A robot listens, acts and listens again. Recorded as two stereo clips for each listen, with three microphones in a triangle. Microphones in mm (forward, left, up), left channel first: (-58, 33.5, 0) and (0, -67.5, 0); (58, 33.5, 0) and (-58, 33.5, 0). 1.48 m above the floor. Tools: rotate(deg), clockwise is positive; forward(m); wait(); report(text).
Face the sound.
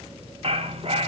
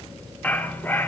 rotate(70)
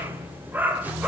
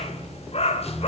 rotate(-15)
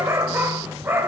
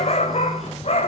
rotate(-10)
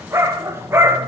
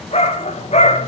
rotate(-10)
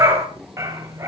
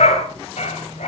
report("Found it: a dog barking, straight ahead.")